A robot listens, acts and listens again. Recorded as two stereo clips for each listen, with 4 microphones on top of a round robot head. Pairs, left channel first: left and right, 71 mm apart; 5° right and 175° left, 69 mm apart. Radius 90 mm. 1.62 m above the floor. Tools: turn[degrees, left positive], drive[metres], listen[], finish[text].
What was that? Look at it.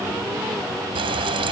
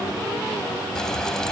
Thought: The frying: 90° right.
Action: turn[-90]
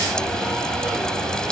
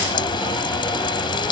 Action: finish[Facing the frying.]